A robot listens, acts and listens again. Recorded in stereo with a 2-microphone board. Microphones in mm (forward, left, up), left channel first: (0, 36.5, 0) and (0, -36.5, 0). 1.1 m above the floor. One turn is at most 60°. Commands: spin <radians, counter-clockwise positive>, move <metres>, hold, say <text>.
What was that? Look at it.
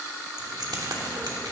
spin -1.05
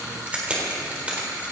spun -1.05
spin -0.35
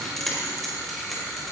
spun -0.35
say Found it: keys jangling, straight ahead.